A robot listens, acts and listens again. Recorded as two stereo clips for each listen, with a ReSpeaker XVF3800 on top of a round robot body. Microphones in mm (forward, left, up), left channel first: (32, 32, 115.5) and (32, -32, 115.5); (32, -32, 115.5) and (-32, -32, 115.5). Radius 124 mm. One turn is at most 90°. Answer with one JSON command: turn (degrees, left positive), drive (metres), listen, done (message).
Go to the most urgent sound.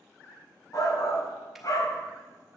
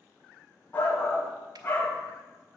{"turn": 55}
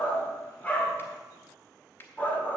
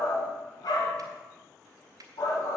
{"turn": 20}
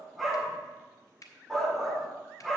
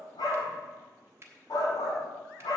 {"drive": 1.0}
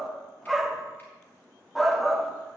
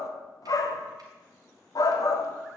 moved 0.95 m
{"drive": 1.0}
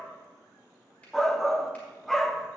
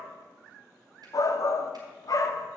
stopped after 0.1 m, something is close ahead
{"done": "Arrived at the shout, straight ahead."}